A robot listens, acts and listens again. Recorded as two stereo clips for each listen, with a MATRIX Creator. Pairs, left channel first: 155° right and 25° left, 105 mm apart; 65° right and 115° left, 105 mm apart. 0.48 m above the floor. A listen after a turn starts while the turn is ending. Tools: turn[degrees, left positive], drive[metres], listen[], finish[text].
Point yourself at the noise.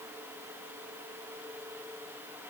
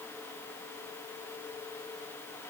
Action: listen[]
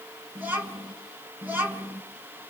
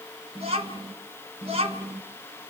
Thought: The child speaking: 95° left.
Action: turn[95]
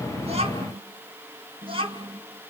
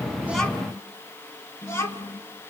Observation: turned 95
Action: finish[Found it: a child speaking, straight ahead.]